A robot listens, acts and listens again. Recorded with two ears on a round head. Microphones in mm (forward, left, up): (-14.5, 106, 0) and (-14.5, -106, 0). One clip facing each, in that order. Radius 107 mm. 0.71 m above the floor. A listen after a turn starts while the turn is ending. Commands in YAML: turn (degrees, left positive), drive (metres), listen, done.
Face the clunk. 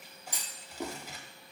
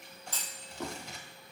turn: 30
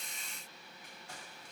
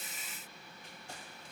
listen: true
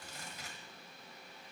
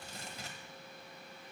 done: "I heard a clunk, but can't make it out now. It was about 15° right or 135° left."